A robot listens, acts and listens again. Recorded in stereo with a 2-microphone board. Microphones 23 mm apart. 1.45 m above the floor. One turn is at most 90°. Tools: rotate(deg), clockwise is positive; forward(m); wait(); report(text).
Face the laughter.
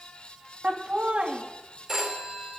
rotate(70)
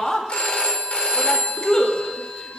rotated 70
rotate(-30)
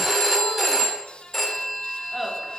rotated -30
rotate(10)
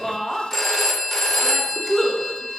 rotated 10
report("Facing the laughter.")